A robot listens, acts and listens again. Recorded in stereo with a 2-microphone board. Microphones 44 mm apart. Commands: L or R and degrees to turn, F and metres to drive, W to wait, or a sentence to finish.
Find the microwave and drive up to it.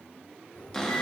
L90
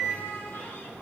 R20
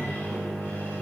F1.0
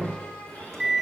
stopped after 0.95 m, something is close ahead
L10
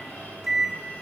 I am next to the microwave.